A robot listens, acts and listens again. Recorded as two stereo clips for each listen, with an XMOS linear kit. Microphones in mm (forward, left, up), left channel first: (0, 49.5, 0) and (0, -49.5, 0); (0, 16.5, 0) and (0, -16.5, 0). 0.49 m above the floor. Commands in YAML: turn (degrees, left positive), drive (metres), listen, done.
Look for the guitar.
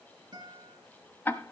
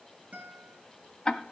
turn: -45
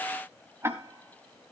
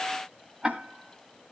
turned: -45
listen: true
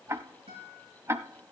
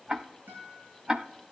turn: -90
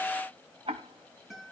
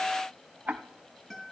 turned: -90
done: "Found it: a guitar, straight ahead."